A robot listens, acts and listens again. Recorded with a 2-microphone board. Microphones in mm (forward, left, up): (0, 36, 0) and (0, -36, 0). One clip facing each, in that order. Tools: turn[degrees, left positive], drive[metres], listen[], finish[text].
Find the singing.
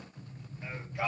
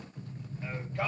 Action: turn[30]
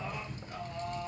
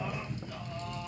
Thought: So it is at 150° left.
Action: turn[150]
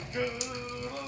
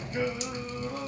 Thought: The singing is now 10° right.
Action: turn[-10]
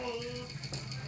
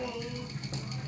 Action: finish[Facing the singing, over 4 m away.]